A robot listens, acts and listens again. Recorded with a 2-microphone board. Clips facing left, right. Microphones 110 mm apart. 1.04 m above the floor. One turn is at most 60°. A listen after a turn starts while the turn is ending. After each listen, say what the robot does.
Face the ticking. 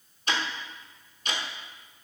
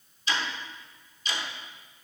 Turn 55° left.
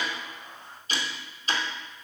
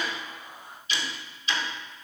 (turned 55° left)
Turn 50° left.
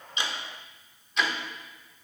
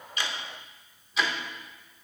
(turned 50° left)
Facing the ticking, under 1 m away.